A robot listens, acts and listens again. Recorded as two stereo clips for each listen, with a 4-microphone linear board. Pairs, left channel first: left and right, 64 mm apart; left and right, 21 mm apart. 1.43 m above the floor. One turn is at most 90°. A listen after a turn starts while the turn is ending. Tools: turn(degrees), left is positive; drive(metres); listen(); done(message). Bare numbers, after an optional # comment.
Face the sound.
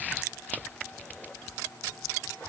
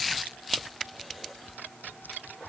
listen()
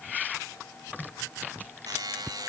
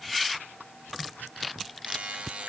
turn(-90)
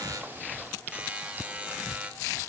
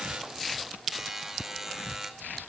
# So it is at 15° right.
turn(-15)
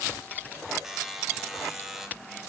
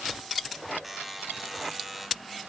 done("Facing the buzzer, 2 to 4 m away.")